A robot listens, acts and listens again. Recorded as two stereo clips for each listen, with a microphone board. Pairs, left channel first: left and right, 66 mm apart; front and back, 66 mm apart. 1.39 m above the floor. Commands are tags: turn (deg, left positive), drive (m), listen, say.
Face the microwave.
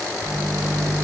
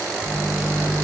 <turn deg="-100"/>
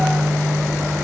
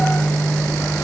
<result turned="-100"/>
<turn deg="10"/>
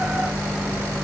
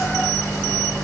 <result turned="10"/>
<say>Facing the microwave, 2 to 4 m away.</say>